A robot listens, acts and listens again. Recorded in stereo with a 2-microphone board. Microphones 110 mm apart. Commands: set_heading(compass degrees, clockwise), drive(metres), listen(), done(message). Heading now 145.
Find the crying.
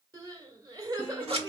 set_heading(185)
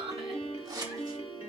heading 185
set_heading(285)
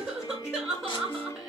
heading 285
done("Found it: crying, straight ahead.")